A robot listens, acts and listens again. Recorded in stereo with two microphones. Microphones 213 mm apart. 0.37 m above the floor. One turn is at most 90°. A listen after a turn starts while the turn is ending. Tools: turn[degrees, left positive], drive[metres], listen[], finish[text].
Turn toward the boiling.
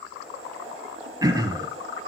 Action: turn[-90]
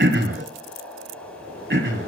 Action: finish[Facing the boiling.]